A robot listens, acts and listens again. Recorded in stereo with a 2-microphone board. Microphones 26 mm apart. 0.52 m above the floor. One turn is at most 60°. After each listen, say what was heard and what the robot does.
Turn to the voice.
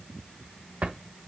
Keep listening.
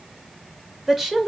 Turn 30° right.
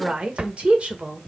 So it is at 125° right. Turn 60° right.
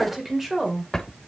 The woman speaking is now 10° right. Turn 10° right.
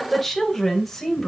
The woman speaking is now 10° left. Turn 10° left.
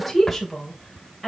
Facing the woman speaking.